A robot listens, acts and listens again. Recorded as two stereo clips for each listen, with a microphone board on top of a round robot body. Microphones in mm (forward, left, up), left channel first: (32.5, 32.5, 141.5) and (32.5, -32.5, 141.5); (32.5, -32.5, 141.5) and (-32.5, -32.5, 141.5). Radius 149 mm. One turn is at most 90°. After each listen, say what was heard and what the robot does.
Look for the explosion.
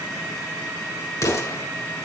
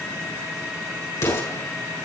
The explosion: 50° left. Turn 50° left.
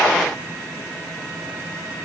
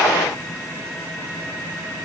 I heard an explosion from this way, but can't make it out now.